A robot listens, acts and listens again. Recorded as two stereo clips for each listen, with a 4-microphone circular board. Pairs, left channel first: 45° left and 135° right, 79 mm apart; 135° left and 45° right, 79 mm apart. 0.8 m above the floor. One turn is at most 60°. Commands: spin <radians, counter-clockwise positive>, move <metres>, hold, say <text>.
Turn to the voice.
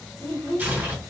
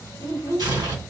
spin -0.44
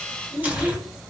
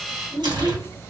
spin -0.35
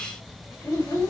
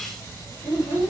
say Found it: a child speaking, straight ahead, 1 to 2 m away.